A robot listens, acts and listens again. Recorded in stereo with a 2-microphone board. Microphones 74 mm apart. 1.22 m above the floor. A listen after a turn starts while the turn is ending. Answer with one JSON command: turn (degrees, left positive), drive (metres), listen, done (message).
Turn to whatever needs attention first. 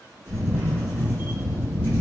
{"listen": true}
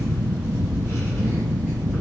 {"listen": true}
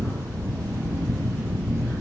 {"done": "I can't make out anything urgent to turn to."}